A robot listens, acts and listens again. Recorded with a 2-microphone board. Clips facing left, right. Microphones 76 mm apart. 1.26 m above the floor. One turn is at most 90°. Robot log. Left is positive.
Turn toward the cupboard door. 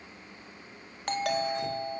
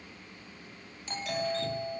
cmd idle
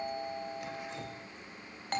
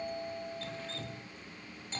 cmd idle
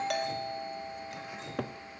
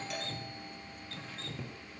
note: The cupboard door: about 70° left or 110° left.
cmd yaw +70
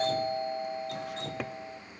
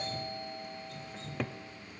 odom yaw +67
end: Found it: a cupboard door, straight ahead.